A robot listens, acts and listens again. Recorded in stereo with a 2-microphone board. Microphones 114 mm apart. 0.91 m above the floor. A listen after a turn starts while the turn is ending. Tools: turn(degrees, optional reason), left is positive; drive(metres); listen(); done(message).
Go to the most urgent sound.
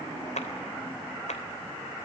listen()
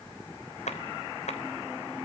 listen()
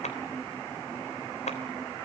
done("I can't make out anything urgent to turn to.")